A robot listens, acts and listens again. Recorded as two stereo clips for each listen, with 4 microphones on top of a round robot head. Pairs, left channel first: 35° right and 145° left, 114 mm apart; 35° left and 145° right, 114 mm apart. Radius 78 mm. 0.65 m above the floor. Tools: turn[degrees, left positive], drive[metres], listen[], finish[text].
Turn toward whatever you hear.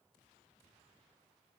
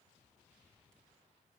Action: listen[]
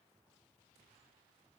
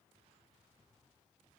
Action: listen[]
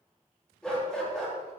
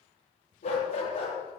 Thought: The dog barking: 50° left.
Action: turn[50]
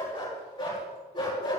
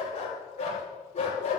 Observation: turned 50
Thought: The dog barking is now 10° left.
Action: turn[10]
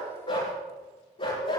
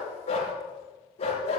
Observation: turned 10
Action: finish[Found it: a dog barking, straight ahead, over 4 m away.]